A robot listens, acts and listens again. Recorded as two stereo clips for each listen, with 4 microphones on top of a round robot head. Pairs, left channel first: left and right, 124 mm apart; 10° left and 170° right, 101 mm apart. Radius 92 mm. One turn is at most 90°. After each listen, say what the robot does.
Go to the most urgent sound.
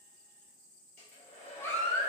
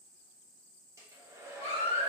Turn 20° left.
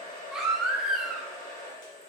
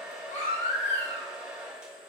Drive 1.0 m forward.
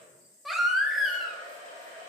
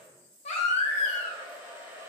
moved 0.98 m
Drive 1.0 m forward.
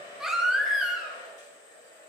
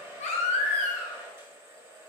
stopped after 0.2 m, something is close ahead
I am next to the baby crying.